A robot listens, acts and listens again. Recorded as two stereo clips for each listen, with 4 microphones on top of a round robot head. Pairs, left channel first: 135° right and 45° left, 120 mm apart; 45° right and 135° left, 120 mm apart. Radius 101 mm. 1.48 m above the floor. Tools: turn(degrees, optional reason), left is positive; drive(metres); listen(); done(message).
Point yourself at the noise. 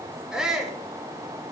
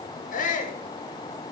turn(degrees=-40, reason="The shout: 40° right.")
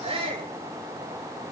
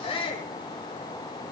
done("Facing the shout.")